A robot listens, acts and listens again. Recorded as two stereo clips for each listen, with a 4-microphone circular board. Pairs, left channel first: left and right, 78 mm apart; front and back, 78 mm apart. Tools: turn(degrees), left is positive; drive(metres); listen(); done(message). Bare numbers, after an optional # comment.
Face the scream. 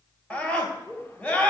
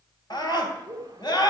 # The scream: 20° left.
turn(20)
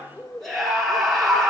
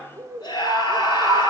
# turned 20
done("Found it: a scream, straight ahead, 2 to 4 m away.")